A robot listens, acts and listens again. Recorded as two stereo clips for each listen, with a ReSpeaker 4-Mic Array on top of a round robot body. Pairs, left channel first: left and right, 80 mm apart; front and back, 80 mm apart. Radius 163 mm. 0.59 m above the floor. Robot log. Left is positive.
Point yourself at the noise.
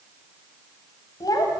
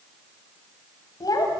note: The child speaking: 45° left.
cmd yaw +45
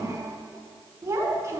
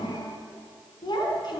note: The child speaking is now 35° right.
cmd yaw -35
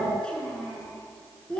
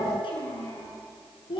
note: The child speaking is now 10° left.
cmd yaw +10
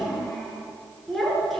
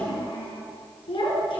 end: Found it: a child speaking, straight ahead, over 4 m away.